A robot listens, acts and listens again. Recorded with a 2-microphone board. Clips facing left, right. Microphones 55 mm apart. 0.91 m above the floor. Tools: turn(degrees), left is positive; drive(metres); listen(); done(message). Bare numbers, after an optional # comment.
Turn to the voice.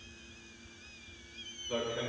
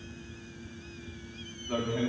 # The man speaking: about 70° right or 110° right.
turn(-70)
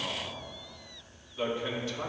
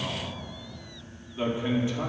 # So it is at 25° right.
turn(-25)
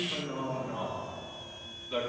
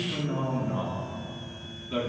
# The man speaking is now 10° right.
turn(-10)
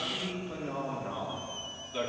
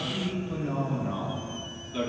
done("Found it: a man speaking, straight ahead.")